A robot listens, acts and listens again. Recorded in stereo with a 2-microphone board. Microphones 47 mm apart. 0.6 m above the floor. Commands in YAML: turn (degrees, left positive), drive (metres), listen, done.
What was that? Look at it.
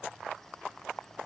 listen: true
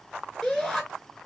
turn: 30
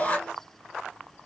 turn: 150
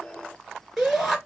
done: "Facing the shout."